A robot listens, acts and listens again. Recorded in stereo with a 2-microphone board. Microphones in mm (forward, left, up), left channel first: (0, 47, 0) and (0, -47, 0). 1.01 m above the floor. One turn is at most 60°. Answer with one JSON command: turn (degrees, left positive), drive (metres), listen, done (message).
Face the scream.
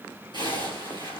{"listen": true}
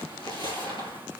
{"listen": true}
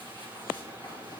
{"done": "I can't make out a scream, only a zipper."}